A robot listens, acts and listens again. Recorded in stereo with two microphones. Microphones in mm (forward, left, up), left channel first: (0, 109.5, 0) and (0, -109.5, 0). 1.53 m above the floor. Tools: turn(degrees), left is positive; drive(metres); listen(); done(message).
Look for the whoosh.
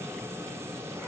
listen()
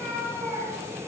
listen()
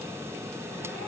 done("I can't make out a whoosh to turn to.")